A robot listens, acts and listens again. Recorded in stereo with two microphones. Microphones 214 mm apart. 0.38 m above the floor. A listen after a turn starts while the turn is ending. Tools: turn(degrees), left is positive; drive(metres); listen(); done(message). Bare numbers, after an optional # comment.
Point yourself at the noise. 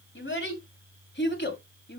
# The child speaking: about 55° left or 125° left.
turn(55)
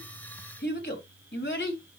# So it is at 60° left.
turn(60)
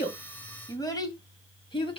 # The child speaking is now 25° left.
turn(25)
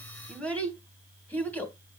# The child speaking is now 10° left.
turn(10)
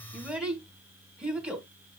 done("Found it: a child speaking, straight ahead.")